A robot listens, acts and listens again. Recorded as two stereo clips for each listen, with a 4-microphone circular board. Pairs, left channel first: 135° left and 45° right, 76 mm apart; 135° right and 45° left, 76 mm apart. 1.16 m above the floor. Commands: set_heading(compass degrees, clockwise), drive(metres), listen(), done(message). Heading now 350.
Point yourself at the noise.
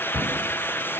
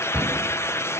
set_heading(225)
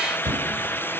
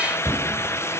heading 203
set_heading(223)
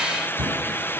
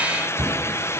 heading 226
done("Found it: a cupboard door, straight ahead, over 4 m away.")